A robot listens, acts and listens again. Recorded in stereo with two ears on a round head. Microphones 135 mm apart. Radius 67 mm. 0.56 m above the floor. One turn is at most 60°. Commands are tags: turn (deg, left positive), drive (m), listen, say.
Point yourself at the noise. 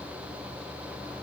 <listen/>
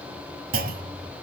<turn deg="-60"/>
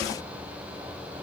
<listen/>
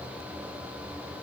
<say>I heard a clunk, but can't make it out now. It was about 5° right or 55° right.</say>